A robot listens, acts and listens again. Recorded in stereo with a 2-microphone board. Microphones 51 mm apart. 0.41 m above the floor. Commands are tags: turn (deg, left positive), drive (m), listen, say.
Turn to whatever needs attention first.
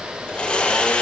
<listen/>
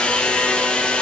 <listen/>
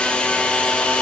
<say>I can't make out anything urgent to turn to.</say>